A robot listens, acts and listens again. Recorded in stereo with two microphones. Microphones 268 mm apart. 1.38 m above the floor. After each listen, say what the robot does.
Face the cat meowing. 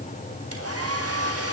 Keep listening.
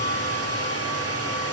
Keep listening.
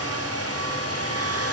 I can't make out a cat meowing, only a hair dryer.